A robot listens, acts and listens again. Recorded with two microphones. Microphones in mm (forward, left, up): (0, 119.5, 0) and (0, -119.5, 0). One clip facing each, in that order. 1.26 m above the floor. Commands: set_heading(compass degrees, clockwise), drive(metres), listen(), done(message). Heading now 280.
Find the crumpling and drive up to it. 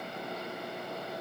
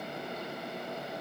listen()
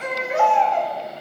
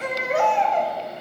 listen()
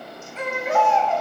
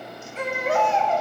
done("I can't make out crumpling to turn to.")